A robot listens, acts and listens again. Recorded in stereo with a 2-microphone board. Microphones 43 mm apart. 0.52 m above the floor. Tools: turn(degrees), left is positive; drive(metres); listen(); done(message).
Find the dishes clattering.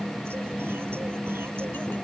listen()
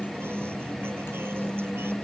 listen()
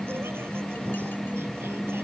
done("I can't make out dishes clattering.")